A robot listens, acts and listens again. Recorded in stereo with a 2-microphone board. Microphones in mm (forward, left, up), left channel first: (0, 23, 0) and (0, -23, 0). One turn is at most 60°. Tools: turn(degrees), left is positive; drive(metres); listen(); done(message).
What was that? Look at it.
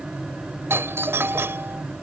turn(degrees=-60)
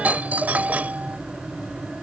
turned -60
turn(degrees=-40)
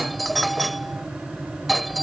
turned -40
done("Facing the doorbell.")